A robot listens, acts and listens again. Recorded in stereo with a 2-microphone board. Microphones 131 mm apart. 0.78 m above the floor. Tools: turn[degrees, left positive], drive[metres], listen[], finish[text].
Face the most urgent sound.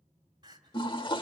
Thought: The crying: about 30° right or 150° right.
Action: turn[-30]
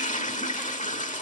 Action: listen[]
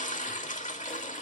Action: listen[]
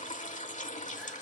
Action: finish[I heard crying, but can't make it out now. It was about straight ahead or 120° right.]